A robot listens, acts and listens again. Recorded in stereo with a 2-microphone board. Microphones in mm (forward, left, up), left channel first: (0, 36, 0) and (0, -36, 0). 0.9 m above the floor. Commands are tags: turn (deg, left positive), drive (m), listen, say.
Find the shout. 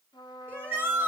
<turn deg="-30"/>
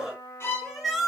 <say>Found it: a shout, straight ahead.</say>